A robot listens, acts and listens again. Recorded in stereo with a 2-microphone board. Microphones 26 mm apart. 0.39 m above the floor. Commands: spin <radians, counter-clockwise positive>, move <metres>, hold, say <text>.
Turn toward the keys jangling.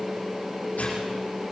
hold
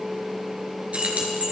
spin -1.05
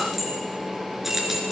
spin -0.17
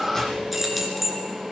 say Facing the keys jangling.